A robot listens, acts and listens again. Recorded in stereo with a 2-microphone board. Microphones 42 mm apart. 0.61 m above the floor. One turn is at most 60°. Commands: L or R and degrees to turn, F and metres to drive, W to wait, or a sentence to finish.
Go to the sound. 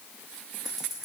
R30
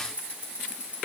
R60
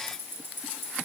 R60
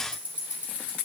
R35
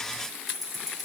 F1.0
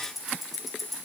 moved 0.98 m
F1.0
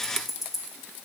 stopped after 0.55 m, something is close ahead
I am next to the ticking.